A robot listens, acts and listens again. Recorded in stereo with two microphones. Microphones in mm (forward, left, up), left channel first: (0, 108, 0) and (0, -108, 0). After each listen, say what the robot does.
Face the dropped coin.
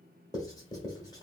Keep listening.
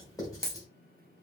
Turn 25° right.
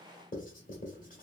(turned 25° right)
Keep listening.
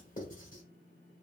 I heard a dropped coin, but can't make it out now. It was about straight ahead or 130° right.